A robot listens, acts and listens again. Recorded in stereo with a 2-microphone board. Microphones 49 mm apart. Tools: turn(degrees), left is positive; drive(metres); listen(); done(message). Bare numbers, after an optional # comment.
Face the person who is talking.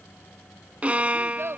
# The child speaking: about 60° right or 120° right.
turn(-60)
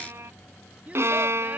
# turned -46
# So it is at 30° right.
turn(-30)
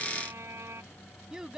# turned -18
# The child speaking is now 15° right.
turn(-15)
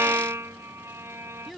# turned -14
done("Facing the child speaking.")